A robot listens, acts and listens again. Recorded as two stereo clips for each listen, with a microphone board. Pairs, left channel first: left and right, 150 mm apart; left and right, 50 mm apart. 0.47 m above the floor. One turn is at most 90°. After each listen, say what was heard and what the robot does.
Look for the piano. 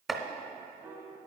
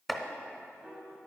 The piano: about 20° right or 160° right. Turn 20° right.
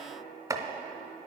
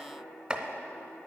Keep listening.
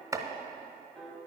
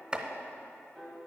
Found it: a piano, straight ahead.